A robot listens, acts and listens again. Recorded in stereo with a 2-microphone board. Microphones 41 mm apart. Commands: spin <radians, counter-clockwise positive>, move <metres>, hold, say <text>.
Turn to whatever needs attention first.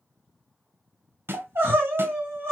spin -0.96
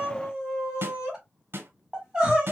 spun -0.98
spin -0.26
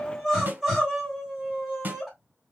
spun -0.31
say Found it: crying, straight ahead, 2 to 4 m away.